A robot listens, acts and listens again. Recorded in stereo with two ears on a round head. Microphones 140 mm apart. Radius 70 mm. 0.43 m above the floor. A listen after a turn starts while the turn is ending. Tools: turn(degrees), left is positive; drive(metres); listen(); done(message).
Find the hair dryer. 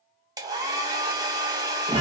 turn(degrees=-25)
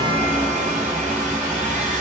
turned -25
listen()
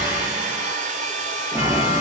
turn(degrees=-130)
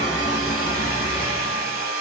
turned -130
turn(degrees=-65)
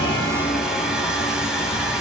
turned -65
listen()
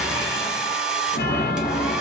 done("Facing the hair dryer, under 1 m away.")